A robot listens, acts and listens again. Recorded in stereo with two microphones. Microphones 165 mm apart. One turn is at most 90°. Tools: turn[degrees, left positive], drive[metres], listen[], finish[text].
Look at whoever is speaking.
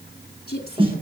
Thought: The woman speaking: about 70° left or 110° left.
Action: turn[70]
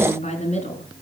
Thought: So it is at 45° left.
Action: turn[45]
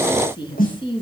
Thought: The woman speaking is now 30° left.
Action: turn[30]
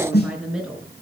Action: finish[Facing the woman speaking, over 4 m away.]